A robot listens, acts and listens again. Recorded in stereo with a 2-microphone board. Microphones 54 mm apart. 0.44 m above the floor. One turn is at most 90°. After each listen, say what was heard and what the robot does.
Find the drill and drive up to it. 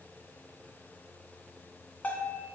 Keep listening.
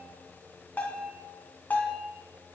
Keep listening.
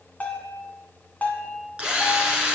The drill: about 15° right or 165° right. Turn 15° right.
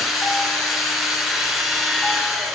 Drive 1.0 m forward.
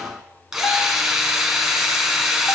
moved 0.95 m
The drill is now 10° right. Turn 10° right.
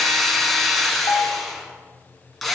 Drive 1.0 m forward.
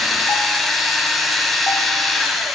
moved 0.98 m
Drive 1.0 m forward.
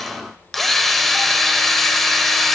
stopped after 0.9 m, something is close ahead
I am next to the drill.